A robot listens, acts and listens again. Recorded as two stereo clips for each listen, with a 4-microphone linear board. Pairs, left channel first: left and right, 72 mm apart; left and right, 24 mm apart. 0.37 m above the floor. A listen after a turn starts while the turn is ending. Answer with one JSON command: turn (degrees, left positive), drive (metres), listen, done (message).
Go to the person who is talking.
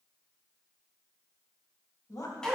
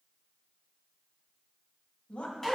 {"turn": 55}
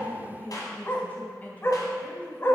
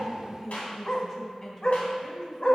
{"turn": 25}
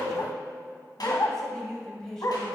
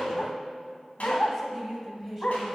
{"drive": 1.0}
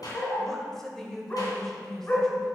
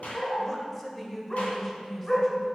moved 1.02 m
{"turn": 10}
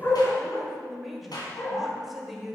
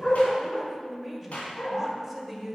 {"drive": 1.0}
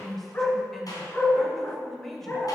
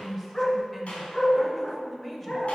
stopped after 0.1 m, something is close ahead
{"done": "I am next to the woman speaking."}